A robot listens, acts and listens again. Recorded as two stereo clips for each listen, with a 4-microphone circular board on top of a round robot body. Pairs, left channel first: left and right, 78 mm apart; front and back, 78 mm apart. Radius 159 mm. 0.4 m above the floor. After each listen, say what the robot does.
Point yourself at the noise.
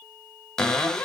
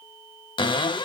Turn 10° left.
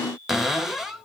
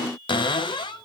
Found it: a cupboard door, straight ahead.